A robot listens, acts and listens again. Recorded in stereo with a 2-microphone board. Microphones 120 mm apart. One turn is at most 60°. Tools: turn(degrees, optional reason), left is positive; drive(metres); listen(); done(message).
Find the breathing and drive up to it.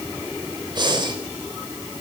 turn(degrees=-40, reason="The breathing: about 40° right or 140° right.")
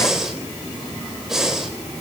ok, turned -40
drive(metres=1.0)
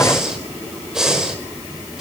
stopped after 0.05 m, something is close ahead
done("Something is in my way. I am facing the breathing but have not reached it.")